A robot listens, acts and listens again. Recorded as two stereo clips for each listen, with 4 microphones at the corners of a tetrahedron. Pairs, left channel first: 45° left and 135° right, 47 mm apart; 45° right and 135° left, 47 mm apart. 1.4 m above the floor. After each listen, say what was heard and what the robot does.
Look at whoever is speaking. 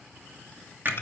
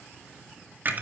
Keep listening.
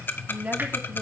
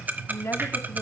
The woman speaking: 75° right. Turn 75° right.
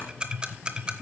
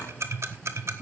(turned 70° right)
Keep listening.
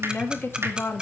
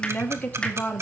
The woman speaking is now 15° left. Turn 15° left.
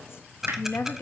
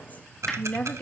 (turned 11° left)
The woman speaking is now 20° left. Turn 20° left.
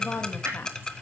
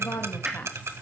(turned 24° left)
The woman speaking is now 10° left. Turn 10° left.
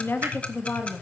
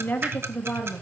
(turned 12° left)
The woman speaking is now 10° left. Turn 10° left.
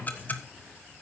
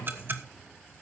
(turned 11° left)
Keep listening.
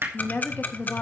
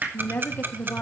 Found it: a woman speaking, straight ahead.